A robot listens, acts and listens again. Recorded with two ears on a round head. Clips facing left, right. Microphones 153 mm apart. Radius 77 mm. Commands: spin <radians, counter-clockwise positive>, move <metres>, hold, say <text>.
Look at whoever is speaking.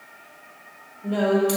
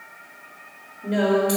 spin -0.52
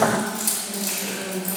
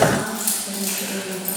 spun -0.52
spin -2.62
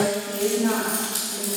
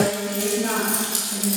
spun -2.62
spin -0.44
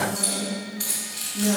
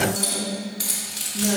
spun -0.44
spin -0.17
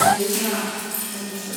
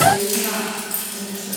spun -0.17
say Facing the woman speaking, 2 to 4 m away.